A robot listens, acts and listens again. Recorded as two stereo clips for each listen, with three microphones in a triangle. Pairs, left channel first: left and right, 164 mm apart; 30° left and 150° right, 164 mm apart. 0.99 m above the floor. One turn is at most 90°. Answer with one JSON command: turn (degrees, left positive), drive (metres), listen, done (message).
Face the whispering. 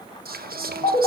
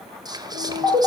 {"turn": -85}
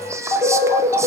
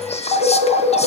{"turn": -20}
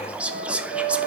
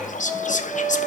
{"turn": -10}
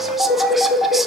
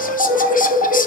{"listen": true}
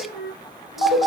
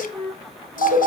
{"listen": true}
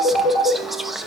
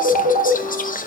{"done": "Found it: whispering, straight ahead, under 1 m away."}